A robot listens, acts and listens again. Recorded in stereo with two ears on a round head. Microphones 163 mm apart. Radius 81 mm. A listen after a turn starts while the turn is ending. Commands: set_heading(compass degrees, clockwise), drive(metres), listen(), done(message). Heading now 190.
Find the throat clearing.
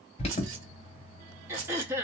set_heading(220)
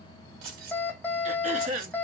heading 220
set_heading(0)
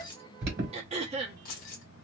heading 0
set_heading(35)
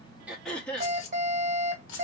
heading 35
done("Facing the throat clearing, under 1 m away.")